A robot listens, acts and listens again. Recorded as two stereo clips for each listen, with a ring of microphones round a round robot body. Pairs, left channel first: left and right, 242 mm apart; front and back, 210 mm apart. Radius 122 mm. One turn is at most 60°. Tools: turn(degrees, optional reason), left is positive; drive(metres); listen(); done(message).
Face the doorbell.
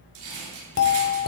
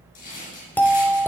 turn(degrees=60, reason="The doorbell: 80° left.")
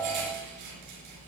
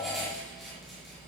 turn(degrees=20, reason="Nothing new. It was at 20° left.")
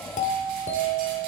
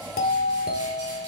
turn(degrees=35, reason="The doorbell is now 35° left.")
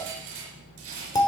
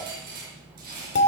turn(degrees=15, reason="The doorbell is now 15° left.")
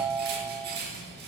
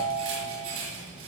done("Facing the doorbell.")